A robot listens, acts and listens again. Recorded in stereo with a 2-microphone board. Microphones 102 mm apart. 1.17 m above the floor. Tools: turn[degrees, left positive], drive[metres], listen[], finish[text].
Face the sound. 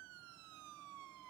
Action: listen[]
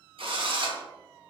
Thought: The drill: about 65° right or 115° right.
Action: turn[-65]
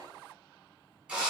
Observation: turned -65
Thought: So it is at 10° right.
Action: turn[-10]
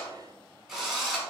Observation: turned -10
Action: finish[Facing the drill, 1 to 2 m away.]